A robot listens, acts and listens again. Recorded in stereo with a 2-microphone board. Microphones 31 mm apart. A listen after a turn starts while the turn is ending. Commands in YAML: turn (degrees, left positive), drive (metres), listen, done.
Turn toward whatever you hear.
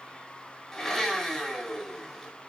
turn: 30
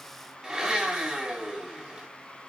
turn: -20
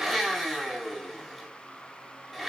done: "Found it: a blender, straight ahead, over 4 m away."